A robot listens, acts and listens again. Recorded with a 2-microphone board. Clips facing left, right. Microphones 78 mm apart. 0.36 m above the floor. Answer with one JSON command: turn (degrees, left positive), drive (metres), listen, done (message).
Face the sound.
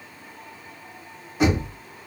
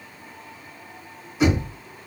{"turn": 50}
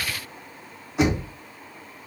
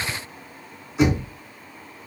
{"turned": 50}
{"turn": 75}
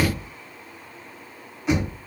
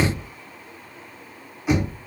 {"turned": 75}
{"done": "Facing the knocking."}